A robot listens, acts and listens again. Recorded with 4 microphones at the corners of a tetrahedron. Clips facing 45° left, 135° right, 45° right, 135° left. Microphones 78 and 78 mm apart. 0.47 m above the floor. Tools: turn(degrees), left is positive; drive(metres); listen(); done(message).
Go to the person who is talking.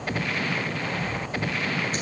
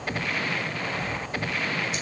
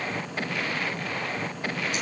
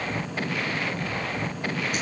listen()
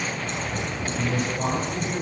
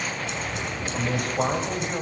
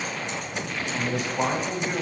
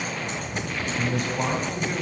turn(degrees=-110)
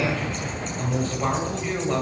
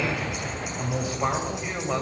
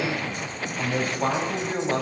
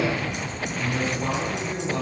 turn(degrees=-55)
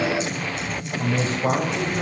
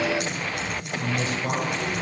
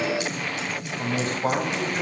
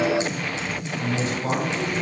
drive(metres=1.0)
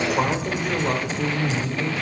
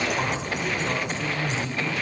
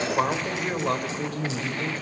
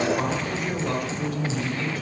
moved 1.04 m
drive(metres=1.0)
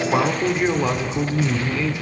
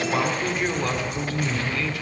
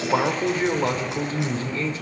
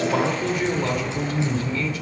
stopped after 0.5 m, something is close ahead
turn(degrees=-10)
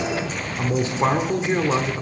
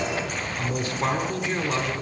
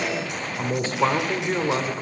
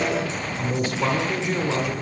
turn(degrees=-10)
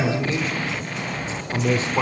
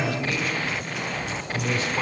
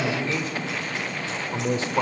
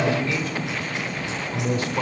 done("I am next to the man speaking.")